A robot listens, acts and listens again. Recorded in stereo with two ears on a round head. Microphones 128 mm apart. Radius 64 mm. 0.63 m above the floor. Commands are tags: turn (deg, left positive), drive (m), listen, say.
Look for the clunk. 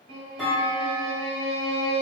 <turn deg="30"/>
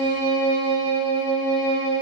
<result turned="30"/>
<listen/>
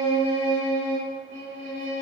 <say>I heard a clunk, but can't make it out now. It was about 30° right or 150° left.</say>